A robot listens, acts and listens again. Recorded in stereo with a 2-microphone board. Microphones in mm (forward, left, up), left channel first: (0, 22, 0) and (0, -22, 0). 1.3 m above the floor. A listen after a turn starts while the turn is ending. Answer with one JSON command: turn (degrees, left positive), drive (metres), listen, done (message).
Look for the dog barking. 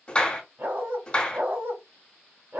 {"turn": -75}
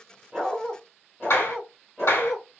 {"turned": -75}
{"done": "Facing the dog barking, 2 to 4 m away."}